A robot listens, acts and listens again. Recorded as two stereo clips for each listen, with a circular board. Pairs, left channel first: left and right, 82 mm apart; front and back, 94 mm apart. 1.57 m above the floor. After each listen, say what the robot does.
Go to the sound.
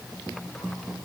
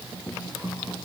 Keep listening.
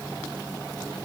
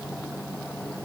Keep listening.
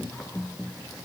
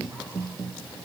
I can't make out anything to turn to.